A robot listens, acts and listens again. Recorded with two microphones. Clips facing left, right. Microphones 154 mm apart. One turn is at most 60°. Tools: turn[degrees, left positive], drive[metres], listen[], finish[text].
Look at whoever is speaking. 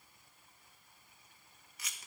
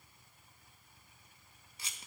Action: listen[]
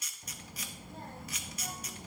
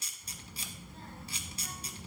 Thought: The child speaking: about 50° left or 130° left.
Action: turn[50]
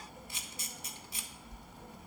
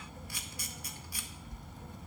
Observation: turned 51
Action: finish[Facing the child speaking, under 1 m away.]